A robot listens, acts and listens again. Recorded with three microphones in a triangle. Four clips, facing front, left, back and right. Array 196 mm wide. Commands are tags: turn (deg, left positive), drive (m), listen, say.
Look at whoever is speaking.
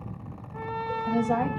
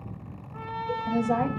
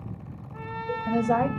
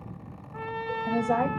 <turn deg="-150"/>
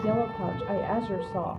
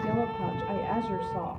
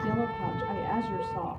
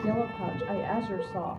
<say>Facing the woman speaking.</say>